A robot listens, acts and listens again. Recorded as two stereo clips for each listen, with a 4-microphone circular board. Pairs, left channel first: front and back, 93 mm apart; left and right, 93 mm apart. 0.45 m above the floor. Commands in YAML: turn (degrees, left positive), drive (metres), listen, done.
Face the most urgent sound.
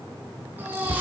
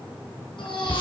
turn: 110
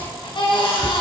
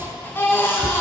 turn: 25
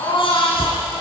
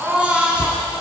turn: -15
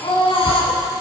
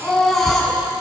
done: "Found it: a baby crying, straight ahead."